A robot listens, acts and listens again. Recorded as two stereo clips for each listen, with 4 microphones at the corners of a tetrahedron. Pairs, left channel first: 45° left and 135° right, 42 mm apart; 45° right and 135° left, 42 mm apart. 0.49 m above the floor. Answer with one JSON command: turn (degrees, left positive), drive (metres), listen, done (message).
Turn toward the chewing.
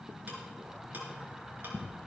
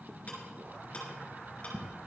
{"listen": true}
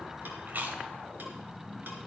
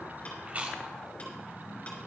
{"turn": -175}
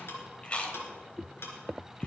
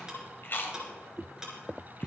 {"turn": -15}
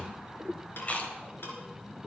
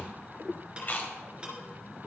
{"done": "Facing the chewing, 1 to 2 m away."}